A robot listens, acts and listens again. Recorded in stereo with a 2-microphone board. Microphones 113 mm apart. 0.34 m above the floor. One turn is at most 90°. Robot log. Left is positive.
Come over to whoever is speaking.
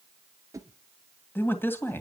note: The man speaking: about 20° left or 160° left.
cmd yaw +20
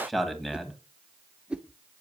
cmd fwd 1.0
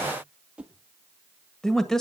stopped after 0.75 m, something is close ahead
end: Arrived at the man speaking, straight ahead.